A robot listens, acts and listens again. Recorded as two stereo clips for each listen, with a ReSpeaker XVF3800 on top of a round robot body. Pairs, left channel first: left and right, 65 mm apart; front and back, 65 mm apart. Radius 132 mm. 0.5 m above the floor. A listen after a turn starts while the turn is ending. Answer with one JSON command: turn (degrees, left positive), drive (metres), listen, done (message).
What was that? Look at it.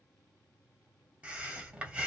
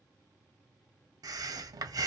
{"turn": -160}
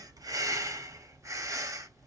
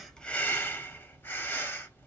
{"turn": -55}
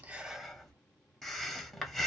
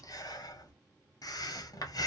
{"done": "Facing the breathing, under 1 m away."}